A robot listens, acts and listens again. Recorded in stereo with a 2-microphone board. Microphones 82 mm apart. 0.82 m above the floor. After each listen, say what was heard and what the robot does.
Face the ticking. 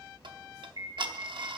The ticking: about 65° right or 115° right. Turn 65° right.
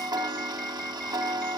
So it is at 50° right. Turn 50° right.
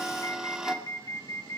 Found it: ticking, straight ahead, under 1 m away.